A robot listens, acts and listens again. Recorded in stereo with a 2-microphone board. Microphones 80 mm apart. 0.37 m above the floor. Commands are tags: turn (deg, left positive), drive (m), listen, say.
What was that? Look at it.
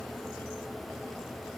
<listen/>
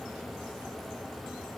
<listen/>
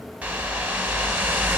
<turn deg="-20"/>
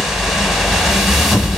<say>Found it: a whoosh, straight ahead, under 1 m away.</say>